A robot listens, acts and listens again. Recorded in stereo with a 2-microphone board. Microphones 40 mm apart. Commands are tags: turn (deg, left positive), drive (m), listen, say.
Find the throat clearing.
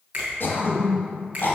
<turn deg="70"/>
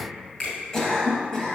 <turn deg="15"/>
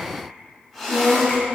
<say>Facing the throat clearing, 1 to 2 m away.</say>